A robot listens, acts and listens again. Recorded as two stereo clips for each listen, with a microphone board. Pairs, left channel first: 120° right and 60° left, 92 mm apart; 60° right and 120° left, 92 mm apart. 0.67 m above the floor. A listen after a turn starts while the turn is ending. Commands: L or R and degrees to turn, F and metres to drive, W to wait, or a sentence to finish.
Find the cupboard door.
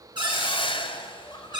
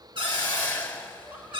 L95
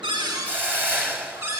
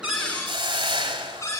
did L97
Facing the cupboard door, over 4 m away.